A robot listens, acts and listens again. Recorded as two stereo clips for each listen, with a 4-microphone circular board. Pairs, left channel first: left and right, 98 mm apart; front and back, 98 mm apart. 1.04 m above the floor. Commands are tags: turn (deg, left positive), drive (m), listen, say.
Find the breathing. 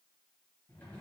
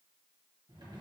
<listen/>
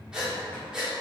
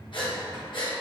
<turn deg="-10"/>
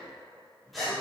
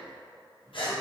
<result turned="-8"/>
<say>Facing the breathing, 1 to 2 m away.</say>